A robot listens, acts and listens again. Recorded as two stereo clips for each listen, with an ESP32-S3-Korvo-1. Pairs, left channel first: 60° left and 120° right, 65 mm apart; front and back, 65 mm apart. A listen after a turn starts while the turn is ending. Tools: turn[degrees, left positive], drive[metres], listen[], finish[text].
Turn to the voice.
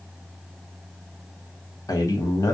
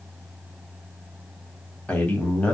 Thought: The man speaking: 65° left.
Action: turn[65]
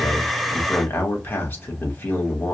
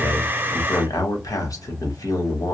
Thought: The man speaking is now 10° left.
Action: turn[10]
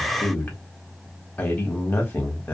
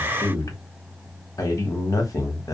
Action: finish[Found it: a man speaking, straight ahead.]